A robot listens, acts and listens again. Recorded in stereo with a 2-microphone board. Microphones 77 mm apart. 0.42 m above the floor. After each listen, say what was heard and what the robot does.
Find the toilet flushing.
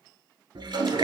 The toilet flushing: about 75° right or 105° right. Turn 75° right.
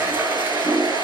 So it is at 30° right. Turn 30° right.
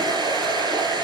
Keep listening.
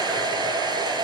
Keep listening.
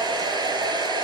Facing where the toilet flushing came from. I can't hear it now.